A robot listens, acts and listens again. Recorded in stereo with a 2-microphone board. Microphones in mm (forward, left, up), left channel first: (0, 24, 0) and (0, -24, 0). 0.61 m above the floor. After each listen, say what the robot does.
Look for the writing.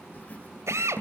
Turn 30° left.
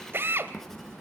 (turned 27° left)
Facing the writing, 2 to 4 m away.